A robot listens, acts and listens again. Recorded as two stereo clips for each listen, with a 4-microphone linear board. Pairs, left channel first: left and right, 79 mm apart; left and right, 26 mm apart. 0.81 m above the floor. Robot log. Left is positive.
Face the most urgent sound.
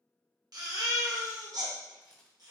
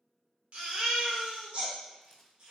note: The baby crying: about 60° right or 120° right.
cmd yaw -60
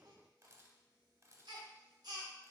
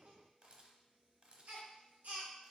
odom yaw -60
note: So it is at 60° right.
cmd yaw -60
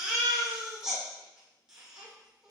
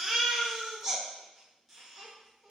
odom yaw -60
note: The baby crying is now 10° right.
cmd yaw -10
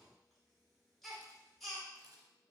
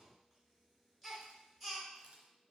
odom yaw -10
end: Facing the baby crying, 1 to 2 m away.